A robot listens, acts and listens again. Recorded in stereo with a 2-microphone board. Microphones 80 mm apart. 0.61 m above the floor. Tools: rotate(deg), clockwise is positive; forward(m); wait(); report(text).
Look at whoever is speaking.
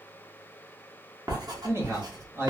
rotate(35)
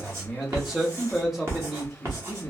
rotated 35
report("Found it: a man speaking, straight ahead.")